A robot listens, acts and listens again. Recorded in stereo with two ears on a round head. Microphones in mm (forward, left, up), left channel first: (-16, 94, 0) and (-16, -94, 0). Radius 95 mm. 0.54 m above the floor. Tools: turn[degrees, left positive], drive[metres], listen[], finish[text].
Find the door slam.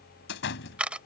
Thought: The door slam: about 65° left or 115° left.
Action: turn[65]
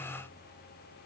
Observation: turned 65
Action: listen[]
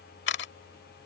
Action: finish[I heard a door slam, but can't make it out now. It was about straight ahead or 50° left.]